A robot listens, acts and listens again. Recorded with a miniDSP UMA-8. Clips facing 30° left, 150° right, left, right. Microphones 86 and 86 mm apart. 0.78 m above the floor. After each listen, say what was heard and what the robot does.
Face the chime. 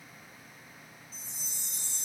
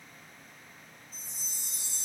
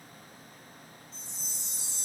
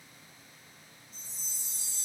The chime: 90° left. Turn 90° left.
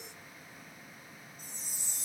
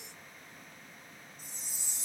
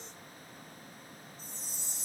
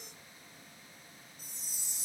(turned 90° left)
The chime is now 10° right. Turn 10° right.
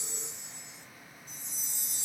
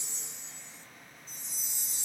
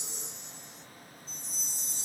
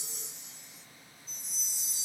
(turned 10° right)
Facing the chime.